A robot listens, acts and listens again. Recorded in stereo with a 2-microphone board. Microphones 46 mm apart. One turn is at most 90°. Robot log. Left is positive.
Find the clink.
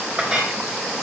note: The clink: about 20° right or 160° right.
cmd yaw -20
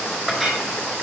end: Facing the clink.